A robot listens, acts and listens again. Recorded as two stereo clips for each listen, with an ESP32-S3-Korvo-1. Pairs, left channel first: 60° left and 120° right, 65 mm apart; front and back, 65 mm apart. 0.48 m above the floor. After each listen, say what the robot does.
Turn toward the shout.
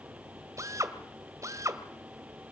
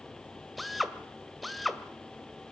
Keep listening.
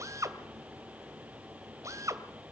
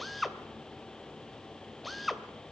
Keep listening.
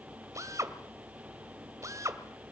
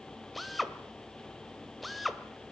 I can't make out a shout, only a drill.